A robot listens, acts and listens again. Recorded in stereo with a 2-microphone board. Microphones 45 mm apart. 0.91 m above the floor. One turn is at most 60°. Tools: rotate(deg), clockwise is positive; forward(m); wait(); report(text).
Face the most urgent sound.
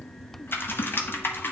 wait()
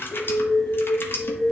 rotate(-25)
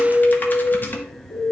rotate(-60)
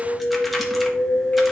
rotate(-60)
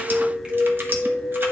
report("Facing the alarm.")